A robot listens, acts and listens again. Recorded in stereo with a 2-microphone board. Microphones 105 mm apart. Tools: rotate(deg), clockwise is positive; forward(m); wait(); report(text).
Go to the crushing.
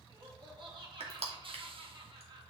rotate(90)
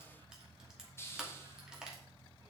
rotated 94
forward(1.0)
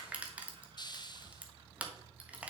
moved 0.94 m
rotate(15)
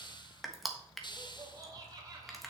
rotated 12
forward(1.0)
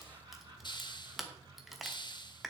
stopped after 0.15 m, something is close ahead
report("I am next to the crushing.")